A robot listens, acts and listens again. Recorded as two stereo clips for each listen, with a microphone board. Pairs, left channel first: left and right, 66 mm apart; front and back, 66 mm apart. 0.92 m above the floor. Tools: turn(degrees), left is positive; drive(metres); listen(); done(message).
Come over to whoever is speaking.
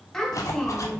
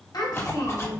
drive(metres=1.0)
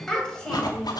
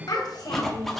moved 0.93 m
turn(degrees=10)
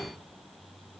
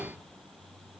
listen()
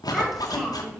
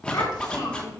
drive(metres=1.0)
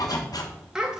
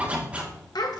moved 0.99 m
turn(degrees=-10)
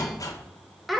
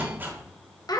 drive(metres=1.0)
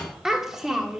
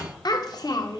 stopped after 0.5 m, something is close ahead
done("I am next to the child speaking.")